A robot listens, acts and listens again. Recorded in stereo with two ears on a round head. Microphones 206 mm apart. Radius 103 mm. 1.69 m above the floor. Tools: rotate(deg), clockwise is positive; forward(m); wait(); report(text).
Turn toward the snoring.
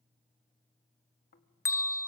rotate(-45)
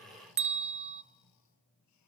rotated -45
rotate(-90)
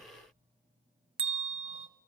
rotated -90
rotate(25)
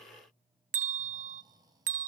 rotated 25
rotate(15)
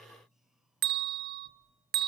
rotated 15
report("Found it: snoring, straight ahead, 1 to 2 m away.")